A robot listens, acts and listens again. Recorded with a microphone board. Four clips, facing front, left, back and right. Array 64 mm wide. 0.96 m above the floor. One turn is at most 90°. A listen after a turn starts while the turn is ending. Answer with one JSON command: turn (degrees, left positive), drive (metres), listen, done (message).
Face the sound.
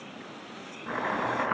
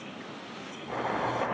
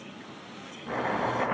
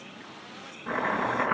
{"turn": -65}
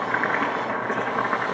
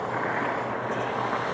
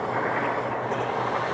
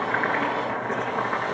{"turn": -10}
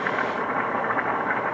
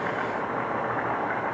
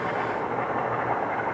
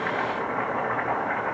{"done": "Found it: chopping, straight ahead, over 4 m away."}